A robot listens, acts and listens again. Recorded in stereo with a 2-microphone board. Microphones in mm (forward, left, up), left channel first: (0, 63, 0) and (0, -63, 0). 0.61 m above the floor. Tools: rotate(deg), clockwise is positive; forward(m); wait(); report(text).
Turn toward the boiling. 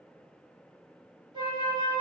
wait()
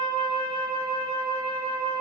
wait()
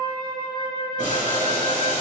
rotate(-90)
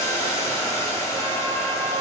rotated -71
rotate(-25)
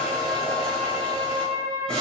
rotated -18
report("Facing the boiling.")